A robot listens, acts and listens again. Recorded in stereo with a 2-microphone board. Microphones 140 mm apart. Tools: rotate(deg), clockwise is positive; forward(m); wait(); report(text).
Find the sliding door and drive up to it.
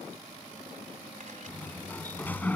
rotate(-30)
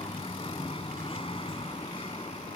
rotate(-140)
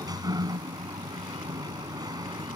rotate(30)
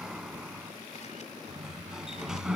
forward(1.0)
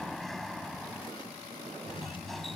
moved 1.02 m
forward(1.0)
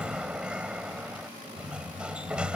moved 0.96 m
rotate(10)
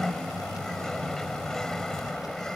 forward(1.0)
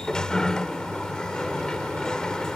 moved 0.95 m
forward(1.0)
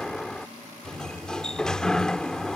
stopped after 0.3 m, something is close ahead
report("Arrived at the sliding door, straight ahead.")